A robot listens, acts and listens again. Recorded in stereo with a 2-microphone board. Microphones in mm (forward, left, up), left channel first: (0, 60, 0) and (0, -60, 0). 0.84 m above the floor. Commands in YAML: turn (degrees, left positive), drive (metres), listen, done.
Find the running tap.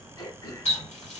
turn: 70
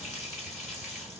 done: "Found it: a running tap, straight ahead."